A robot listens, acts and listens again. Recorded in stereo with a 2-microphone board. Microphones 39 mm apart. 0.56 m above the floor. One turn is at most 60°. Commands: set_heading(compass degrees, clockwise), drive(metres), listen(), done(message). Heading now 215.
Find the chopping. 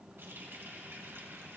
listen()
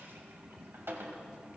listen()
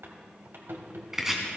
set_heading(245)
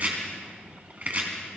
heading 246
set_heading(306)
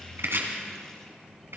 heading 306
set_heading(6)
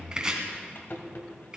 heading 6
set_heading(26)
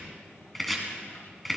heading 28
done("Found it: chopping, straight ahead, 2 to 4 m away.")